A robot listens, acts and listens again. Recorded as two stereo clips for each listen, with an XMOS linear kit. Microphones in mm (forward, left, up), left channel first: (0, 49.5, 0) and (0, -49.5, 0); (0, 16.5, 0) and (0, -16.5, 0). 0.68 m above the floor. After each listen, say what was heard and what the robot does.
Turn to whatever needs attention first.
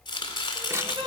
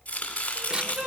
The crying: about 65° right or 115° right. Turn 65° right.
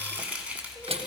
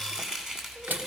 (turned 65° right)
Keep listening.
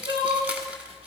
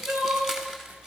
So it is at 50° right. Turn 50° right.
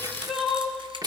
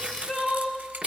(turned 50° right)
Found it: crying, straight ahead, 2 to 4 m away.